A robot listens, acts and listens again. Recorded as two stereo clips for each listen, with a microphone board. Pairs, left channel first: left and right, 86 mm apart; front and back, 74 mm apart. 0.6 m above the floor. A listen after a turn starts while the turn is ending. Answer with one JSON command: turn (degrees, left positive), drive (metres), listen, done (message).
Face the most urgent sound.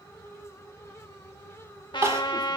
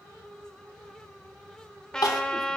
{"turn": -30}
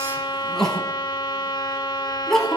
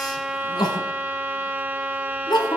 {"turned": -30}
{"done": "Found it: crying, straight ahead."}